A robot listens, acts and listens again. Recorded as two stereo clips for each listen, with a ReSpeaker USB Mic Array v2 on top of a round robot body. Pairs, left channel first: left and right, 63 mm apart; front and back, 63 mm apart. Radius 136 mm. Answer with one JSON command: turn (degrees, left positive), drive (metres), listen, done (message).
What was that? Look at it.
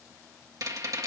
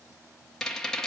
{"turn": -80}
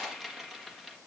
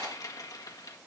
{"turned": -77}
{"done": "Found it: a rattle, straight ahead."}